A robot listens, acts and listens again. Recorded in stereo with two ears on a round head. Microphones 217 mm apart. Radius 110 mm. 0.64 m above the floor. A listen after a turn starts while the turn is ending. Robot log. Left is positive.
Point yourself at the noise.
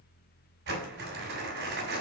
note: The crumpling: about 50° right or 130° right.
cmd yaw -50
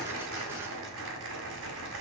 note: So it is at 80° right.
cmd yaw -80
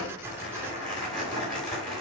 end: Facing the crumpling, 2 to 4 m away.